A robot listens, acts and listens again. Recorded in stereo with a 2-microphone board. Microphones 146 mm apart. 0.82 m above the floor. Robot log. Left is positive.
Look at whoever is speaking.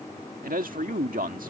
note: The man speaking: about 70° right or 110° right.
cmd yaw -70
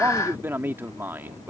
note: So it is at 15° right.
cmd yaw -15
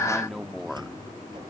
end: Facing the man speaking.